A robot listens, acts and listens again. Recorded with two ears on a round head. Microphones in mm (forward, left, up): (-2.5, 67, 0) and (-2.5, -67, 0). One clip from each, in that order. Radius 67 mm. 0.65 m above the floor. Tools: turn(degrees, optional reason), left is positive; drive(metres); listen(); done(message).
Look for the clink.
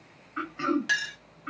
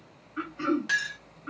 turn(degrees=20, reason="The clink: about 20° left or 160° left.")
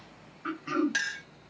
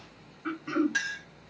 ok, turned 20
turn(degrees=140, reason="So it is at 140° left.")
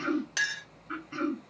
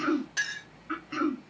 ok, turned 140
turn(degrees=60, reason="The clink is now 60° left.")
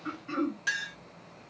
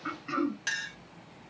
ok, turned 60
turn(degrees=-20, reason="The clink is now 20° right.")
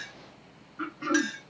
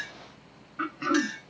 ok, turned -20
done("Facing the clink, 1 to 2 m away.")